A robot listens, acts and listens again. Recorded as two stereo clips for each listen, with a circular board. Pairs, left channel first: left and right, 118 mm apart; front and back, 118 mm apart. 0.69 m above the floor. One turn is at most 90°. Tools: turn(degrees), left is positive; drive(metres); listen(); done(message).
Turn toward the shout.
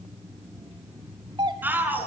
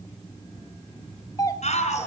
turn(degrees=-15)
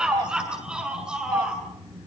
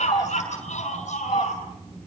turn(degrees=-10)
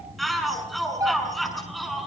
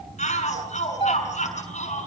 done("Found it: a shout, straight ahead.")